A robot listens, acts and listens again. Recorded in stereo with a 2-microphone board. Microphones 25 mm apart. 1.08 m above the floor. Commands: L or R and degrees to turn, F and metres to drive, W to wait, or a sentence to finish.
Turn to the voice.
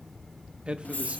R50
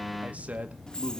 R50
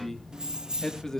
L20
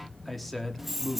L10
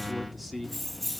Facing the man speaking, 2 to 4 m away.